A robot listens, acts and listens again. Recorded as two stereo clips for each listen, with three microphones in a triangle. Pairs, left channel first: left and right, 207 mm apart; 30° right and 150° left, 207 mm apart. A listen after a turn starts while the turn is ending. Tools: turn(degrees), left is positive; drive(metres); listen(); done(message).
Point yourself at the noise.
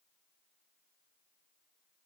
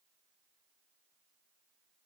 listen()
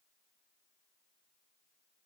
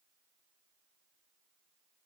listen()
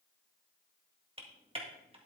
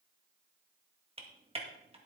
turn(degrees=-150)
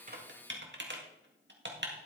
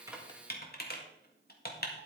turn(degrees=-65)
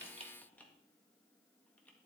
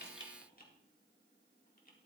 listen()
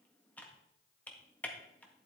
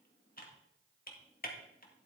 done("Facing the typing on a keyboard.")